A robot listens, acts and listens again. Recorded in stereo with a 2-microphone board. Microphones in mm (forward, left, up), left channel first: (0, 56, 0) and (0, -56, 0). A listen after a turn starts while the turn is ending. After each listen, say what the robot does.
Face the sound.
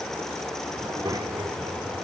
Turn 35° right.
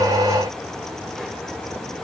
Keep listening.
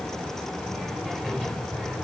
Found it: a child speaking, straight ahead.